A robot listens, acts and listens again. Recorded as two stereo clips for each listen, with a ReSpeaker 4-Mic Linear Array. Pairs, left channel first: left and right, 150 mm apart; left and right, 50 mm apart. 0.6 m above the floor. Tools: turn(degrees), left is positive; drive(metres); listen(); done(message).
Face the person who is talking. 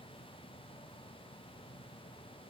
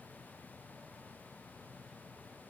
listen()
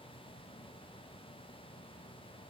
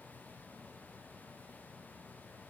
listen()
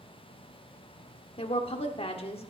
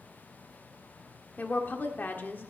turn(degrees=40)
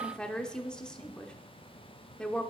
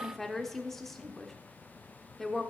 done("Facing the woman speaking.")